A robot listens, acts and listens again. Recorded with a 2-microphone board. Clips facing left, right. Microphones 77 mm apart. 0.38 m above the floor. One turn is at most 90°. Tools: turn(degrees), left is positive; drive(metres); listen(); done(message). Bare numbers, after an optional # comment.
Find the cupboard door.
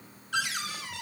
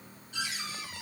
turn(90)
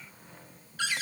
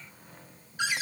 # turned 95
# So it is at 15° right.
turn(-15)
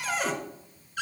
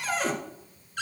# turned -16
done("Facing the cupboard door.")